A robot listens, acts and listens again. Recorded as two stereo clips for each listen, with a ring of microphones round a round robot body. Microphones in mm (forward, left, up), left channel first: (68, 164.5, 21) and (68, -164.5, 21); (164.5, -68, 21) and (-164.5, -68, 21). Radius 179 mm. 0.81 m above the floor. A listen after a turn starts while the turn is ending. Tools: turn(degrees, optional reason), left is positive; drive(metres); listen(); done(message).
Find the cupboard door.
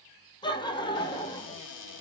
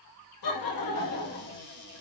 turn(degrees=65, reason="The cupboard door: 65° left.")
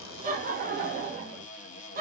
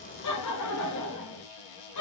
turn(degrees=20, reason="The cupboard door is now 20° left.")
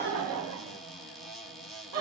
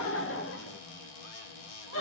done("Found it: a cupboard door, straight ahead, 1 to 2 m away.")